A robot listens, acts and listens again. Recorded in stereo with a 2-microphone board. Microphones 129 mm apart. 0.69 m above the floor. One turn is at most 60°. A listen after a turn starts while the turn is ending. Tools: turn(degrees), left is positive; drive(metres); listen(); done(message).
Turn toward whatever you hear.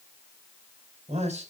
turn(degrees=-60)
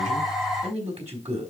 turn(degrees=-60)
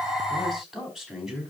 done("Found it: a man speaking, straight ahead, over 4 m away.")